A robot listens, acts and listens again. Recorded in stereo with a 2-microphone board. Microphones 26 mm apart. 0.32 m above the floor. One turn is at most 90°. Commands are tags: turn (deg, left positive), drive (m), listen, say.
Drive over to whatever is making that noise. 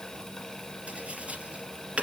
<turn deg="-60"/>
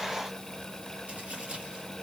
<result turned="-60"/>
<listen/>
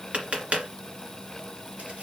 <turn deg="-60"/>
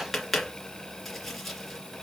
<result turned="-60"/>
<drive m="1.0"/>
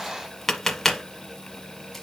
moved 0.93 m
<turn deg="10"/>
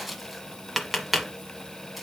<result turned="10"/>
<drive m="1.0"/>
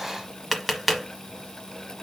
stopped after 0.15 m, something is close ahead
<say>Arrived at the tapping, straight ahead.</say>